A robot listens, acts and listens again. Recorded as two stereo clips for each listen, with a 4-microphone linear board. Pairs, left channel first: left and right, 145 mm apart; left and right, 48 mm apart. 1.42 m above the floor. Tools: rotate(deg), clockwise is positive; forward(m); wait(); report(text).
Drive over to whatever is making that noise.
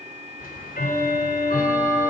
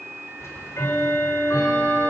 rotate(-90)
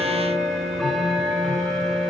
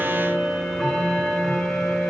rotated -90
forward(1.0)
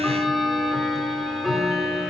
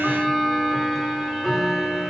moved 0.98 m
forward(1.0)
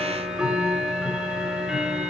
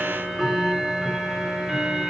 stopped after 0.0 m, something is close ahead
report("Something is in my way. I am facing the ticking but have not reached it.")